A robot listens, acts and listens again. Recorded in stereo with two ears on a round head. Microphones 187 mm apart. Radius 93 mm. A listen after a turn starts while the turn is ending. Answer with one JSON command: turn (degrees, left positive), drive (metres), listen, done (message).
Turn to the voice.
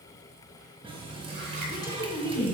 {"turn": 20}
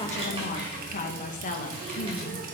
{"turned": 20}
{"turn": 140}
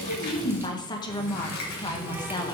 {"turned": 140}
{"turn": 20}
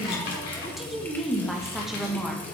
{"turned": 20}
{"done": "Facing the woman speaking, 1 to 2 m away."}